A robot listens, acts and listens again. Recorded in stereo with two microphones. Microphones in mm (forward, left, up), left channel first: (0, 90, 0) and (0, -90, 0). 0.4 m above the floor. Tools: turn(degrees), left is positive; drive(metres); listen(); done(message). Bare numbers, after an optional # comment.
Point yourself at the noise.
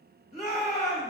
# The shout: about 40° left or 140° left.
turn(40)
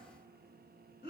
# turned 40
# So it is at 95° left.
turn(95)
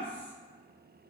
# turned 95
listen()
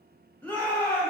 # The shout is now 10° left.
turn(10)
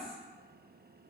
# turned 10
listen()
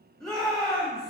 done("Found it: a shout, straight ahead.")